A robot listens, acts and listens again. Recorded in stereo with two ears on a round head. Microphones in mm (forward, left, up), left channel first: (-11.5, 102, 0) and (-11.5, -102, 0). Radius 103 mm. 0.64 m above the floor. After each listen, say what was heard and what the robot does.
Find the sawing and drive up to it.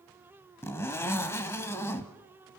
Keep listening.
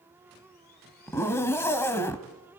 Keep listening.
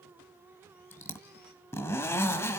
I can't make out sawing, only a zipper.